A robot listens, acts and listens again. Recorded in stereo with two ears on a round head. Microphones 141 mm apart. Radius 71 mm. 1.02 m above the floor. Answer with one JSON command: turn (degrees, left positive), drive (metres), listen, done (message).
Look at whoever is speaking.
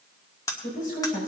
{"turn": 55}
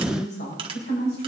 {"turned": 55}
{"turn": 70}
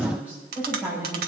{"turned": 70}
{"turn": -10}
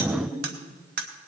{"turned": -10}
{"done": "Facing the woman speaking."}